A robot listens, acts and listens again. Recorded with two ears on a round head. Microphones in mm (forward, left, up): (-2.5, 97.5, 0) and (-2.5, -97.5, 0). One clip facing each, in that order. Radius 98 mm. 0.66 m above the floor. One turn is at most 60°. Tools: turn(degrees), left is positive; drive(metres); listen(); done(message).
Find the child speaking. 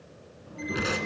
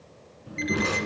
turn(degrees=-25)
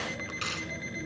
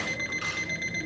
listen()
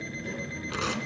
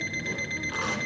done("Facing the child speaking, over 4 m away.")